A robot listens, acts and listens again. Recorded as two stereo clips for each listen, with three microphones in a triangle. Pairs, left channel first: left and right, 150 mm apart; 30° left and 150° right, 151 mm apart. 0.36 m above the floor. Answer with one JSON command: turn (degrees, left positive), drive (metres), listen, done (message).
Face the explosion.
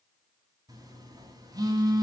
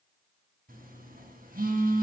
{"listen": true}
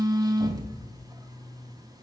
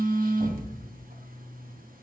{"turn": -125}
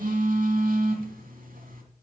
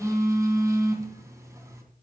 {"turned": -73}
{"turn": -50}
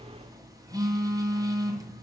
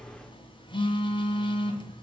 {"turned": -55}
{"done": "I heard an explosion from this way, but can't make it out now."}